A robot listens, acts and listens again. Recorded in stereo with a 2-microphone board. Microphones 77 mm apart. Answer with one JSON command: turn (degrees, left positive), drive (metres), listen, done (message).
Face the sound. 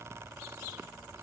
{"listen": true}
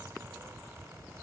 {"listen": true}
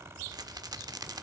{"turn": -60}
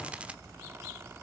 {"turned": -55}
{"turn": -20}
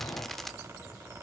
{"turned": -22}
{"done": "Found it: a rattle, straight ahead, under 1 m away."}